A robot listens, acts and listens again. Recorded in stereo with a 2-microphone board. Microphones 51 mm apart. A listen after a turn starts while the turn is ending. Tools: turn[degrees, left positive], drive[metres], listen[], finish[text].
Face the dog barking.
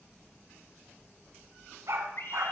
Thought: The dog barking: about 60° right or 120° right.
Action: turn[-60]
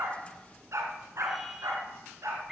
Thought: So it is at 75° right.
Action: turn[-75]
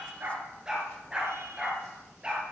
Thought: The dog barking is now 15° right.
Action: turn[-15]
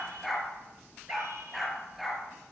Action: finish[Facing the dog barking.]